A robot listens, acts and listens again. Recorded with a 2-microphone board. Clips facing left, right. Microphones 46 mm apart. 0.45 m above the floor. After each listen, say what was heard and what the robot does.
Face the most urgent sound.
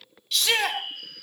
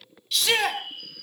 Turn 30° left.
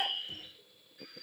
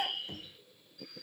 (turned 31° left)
Keep listening.
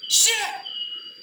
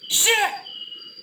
So it is at 35° right. Turn 35° right.
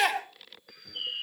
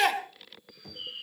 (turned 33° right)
Found it: a shout, straight ahead.